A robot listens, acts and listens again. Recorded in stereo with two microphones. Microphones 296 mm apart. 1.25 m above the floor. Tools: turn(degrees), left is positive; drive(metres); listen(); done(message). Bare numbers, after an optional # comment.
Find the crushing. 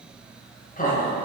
listen()
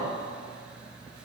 listen()
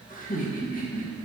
done("I can't make out crushing, only laughter.")